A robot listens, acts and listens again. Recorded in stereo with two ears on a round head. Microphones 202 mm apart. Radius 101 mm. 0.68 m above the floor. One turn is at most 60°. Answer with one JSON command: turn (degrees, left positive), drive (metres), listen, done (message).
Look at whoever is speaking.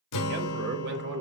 {"turn": -50}
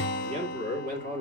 {"turn": -40}
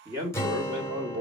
{"turn": -25}
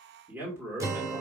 {"turn": -10}
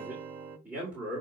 {"turn": -10}
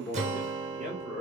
{"done": "Found it: a man speaking, straight ahead."}